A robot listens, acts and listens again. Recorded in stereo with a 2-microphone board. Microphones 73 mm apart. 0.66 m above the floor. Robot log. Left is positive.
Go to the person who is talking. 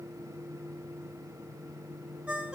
cmd idle
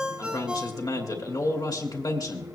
note: The man speaking: about 60° left or 120° left.
cmd yaw +60
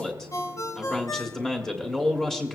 cmd fwd 1.0
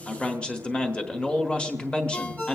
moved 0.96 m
note: The man speaking is now 20° left.
cmd yaw +20
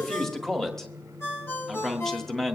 cmd fwd 1.0
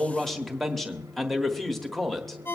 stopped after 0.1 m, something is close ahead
end: Arrived at the man speaking, straight ahead.